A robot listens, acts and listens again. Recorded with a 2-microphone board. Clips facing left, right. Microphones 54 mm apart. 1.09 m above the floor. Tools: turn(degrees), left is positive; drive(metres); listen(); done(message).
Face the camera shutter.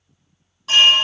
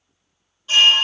listen()
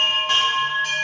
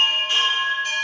listen()
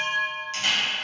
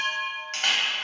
turn(degrees=-50)
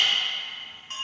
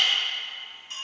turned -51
listen()
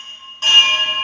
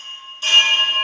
listen()
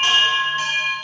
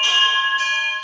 done("I heard a camera shutter, but can't make it out now. It was about 5° left or 80° right.")